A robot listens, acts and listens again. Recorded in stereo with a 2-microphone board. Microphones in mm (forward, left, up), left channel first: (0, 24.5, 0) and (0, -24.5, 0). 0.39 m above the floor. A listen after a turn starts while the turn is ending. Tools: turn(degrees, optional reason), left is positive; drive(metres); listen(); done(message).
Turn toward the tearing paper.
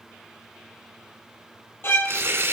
turn(degrees=-60, reason="The tearing paper: about 60° right or 120° right.")
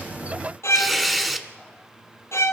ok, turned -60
done("Found it: tearing paper, straight ahead, 1 to 2 m away.")